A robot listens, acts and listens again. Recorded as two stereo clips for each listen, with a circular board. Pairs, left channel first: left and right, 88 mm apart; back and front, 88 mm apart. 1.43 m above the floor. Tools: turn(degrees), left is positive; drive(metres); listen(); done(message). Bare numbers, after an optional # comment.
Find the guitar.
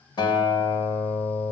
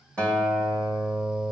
# The guitar: 105° left.
turn(105)
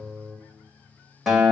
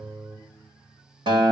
done("Facing the guitar.")